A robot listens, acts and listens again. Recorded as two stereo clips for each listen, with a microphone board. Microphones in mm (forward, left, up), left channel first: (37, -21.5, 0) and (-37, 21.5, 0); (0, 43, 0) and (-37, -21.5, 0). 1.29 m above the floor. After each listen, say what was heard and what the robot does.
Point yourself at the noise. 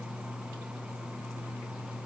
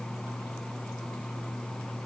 Keep listening.
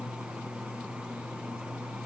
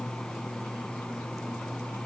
Keep listening.
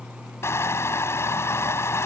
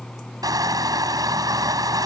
The crushing: 90° right. Turn 90° right.
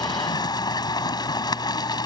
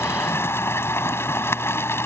Found it: crushing, straight ahead.